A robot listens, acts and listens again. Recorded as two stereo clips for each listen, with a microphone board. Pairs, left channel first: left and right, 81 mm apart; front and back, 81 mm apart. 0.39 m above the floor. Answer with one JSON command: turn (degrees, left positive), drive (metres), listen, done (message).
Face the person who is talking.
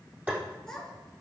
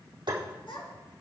{"done": "Facing the child speaking, 2 to 4 m away."}